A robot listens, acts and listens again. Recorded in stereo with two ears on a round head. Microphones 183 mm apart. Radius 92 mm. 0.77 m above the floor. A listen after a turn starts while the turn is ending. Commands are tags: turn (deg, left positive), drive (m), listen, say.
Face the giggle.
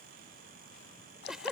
<turn deg="30"/>
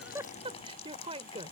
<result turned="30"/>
<turn deg="-30"/>
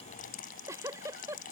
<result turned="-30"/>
<turn deg="-15"/>
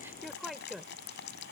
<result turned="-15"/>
<say>Found it: a giggle, straight ahead.</say>